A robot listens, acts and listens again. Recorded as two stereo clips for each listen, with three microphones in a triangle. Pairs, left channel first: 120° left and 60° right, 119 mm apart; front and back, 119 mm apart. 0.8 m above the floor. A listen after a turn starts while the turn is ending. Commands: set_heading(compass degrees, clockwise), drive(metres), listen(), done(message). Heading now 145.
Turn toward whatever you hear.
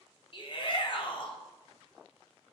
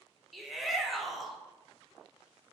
set_heading(55)
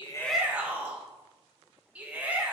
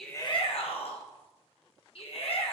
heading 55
set_heading(40)
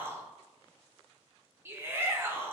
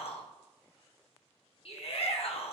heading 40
done("Found it: a shout, straight ahead.")